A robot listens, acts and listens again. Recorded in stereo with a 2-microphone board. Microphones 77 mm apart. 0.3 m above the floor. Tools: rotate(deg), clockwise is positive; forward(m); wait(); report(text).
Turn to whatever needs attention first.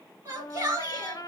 rotate(50)
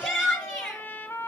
report("Facing the shout, 2 to 4 m away.")